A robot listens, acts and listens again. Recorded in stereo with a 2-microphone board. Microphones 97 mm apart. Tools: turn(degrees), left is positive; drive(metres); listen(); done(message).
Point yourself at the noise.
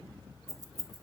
turn(degrees=-40)
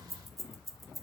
done("Found it: keys jangling, straight ahead.")